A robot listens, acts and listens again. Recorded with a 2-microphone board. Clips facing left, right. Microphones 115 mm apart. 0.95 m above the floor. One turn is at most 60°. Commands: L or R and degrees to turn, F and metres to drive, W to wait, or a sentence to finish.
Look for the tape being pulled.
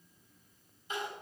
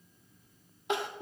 W
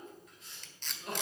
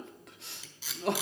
R30
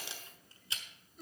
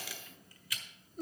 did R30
L25
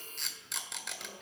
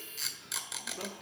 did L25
Found it: tape being pulled, straight ahead, 1 to 2 m away.